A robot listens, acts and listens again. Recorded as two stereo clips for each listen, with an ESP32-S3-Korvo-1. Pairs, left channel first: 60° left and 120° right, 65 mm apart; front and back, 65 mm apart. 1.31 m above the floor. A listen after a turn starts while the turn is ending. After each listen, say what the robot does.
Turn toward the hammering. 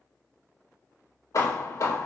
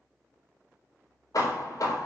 Turn 30° left.
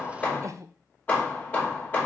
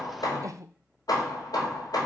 Found it: hammering, straight ahead.